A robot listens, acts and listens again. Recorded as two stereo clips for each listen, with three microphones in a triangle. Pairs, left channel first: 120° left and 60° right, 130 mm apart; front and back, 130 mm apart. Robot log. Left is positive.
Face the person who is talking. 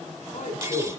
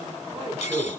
note: The man speaking: 140° left.
cmd yaw +140
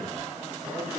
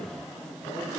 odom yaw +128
note: Nothing new. It was at 10° left.
cmd yaw +10
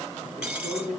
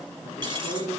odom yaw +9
note: The man speaking is now 20° left.
cmd yaw +20
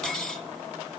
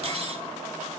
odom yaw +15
note: The man speaking is now 15° left.
cmd yaw +15
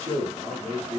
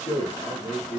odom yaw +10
note: The man speaking is now 10° left.
cmd yaw +10
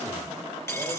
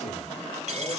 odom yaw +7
cmd idle
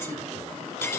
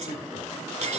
cmd idle
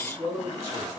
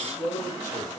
end: Found it: a man speaking, straight ahead.